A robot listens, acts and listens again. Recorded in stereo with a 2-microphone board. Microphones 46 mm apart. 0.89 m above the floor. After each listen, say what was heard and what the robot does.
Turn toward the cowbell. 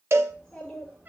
The cowbell: about 65° right or 115° right. Turn 65° right.
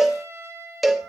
Found it: a cowbell, straight ahead.